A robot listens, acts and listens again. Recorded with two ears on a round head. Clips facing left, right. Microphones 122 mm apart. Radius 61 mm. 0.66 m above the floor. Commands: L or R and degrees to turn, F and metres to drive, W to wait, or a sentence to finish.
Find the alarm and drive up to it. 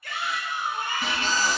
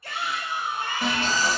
R75
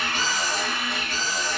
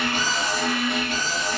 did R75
R25
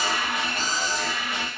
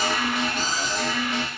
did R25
F1.0
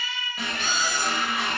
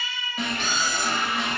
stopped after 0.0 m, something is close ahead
Something is in my way. I am facing the alarm but have not reached it.